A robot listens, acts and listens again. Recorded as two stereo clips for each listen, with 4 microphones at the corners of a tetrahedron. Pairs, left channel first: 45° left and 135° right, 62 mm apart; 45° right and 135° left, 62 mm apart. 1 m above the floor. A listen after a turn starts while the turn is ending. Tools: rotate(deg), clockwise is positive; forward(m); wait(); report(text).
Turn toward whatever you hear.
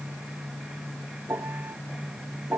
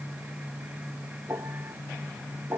rotate(-175)
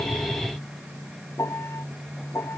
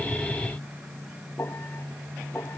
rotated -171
report("Facing the piano.")